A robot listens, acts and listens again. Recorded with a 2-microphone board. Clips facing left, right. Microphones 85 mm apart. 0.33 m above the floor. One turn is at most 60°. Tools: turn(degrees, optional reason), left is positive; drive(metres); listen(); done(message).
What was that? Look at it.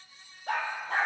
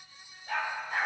turn(degrees=60, reason="The dog barking: about 70° left or 110° left.")
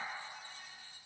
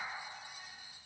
listen()
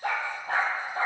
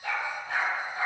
turn(degrees=50, reason="So it is at 50° left.")
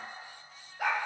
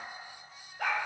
done("Found it: a dog barking, straight ahead.")